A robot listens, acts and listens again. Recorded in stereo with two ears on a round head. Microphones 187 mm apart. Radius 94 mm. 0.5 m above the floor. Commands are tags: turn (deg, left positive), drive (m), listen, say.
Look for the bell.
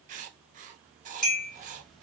<turn deg="30"/>
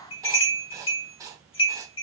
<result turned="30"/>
<turn deg="150"/>
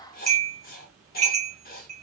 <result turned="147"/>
<say>Found it: a bell, straight ahead.</say>